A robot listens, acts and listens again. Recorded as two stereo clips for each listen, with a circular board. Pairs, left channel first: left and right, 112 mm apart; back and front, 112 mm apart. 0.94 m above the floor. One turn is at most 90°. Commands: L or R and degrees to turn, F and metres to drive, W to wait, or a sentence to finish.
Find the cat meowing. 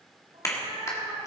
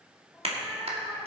R90
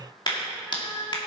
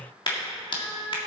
L30
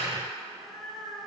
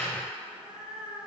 Found it: a cat meowing, straight ahead.